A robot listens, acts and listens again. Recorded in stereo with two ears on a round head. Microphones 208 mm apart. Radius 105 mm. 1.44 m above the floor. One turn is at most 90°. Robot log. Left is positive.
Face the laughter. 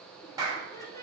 cmd yaw +30
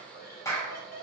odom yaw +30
note: So it is at 140° left.
cmd yaw +90
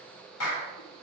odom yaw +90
note: Nothing new. It was at 50° left.
cmd yaw +50
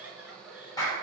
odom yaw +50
end: Found it: laughter, straight ahead, over 4 m away.